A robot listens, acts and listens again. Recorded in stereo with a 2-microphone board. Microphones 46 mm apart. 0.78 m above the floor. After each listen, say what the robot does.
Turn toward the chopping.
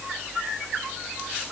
Keep listening.
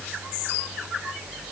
Keep listening.
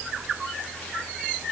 I can't make out chopping.